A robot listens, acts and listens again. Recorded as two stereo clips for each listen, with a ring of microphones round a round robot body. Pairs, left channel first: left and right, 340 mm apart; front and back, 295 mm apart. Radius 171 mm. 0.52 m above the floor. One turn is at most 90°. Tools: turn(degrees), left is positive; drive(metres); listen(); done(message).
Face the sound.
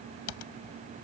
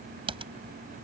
turn(degrees=90)
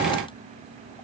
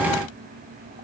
turn(degrees=20)
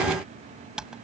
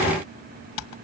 done("Found it: typing on a keyboard, straight ahead.")